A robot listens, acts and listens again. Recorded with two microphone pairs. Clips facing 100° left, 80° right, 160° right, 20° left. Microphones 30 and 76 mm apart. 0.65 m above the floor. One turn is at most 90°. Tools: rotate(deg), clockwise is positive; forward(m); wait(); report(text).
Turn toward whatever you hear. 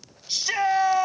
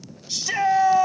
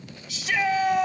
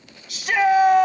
rotate(-35)
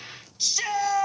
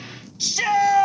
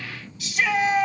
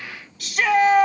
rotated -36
report("Found it: a shout, straight ahead, 1 to 2 m away.")